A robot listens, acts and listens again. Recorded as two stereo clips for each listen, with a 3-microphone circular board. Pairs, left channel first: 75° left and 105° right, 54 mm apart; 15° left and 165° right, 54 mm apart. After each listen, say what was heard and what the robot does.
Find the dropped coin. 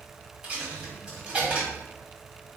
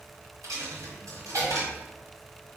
The dropped coin: 175° right. Turn 175° right.
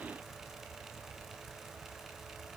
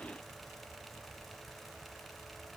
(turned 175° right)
I heard a dropped coin from this way, but can't make it out now.